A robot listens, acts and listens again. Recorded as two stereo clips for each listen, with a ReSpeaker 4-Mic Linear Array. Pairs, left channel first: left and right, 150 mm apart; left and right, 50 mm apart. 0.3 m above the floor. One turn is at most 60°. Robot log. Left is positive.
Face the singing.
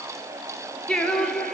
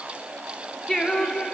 cmd yaw +30
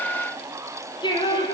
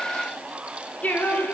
note: So it is at 150° left.
cmd yaw +60
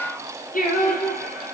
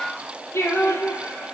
note: The singing is now 115° left.
cmd yaw +60
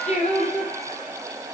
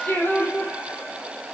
note: The singing is now 50° left.
cmd yaw +50
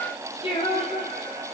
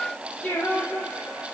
note: The singing is now 35° left.
cmd yaw +35
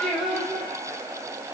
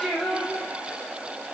end: Found it: singing, straight ahead.